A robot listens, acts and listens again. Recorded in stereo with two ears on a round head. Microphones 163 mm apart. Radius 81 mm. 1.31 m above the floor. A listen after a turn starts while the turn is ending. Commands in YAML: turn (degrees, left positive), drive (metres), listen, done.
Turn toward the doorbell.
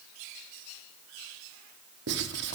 listen: true
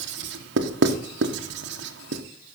listen: true
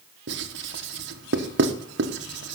done: "I can't make out a doorbell to turn to."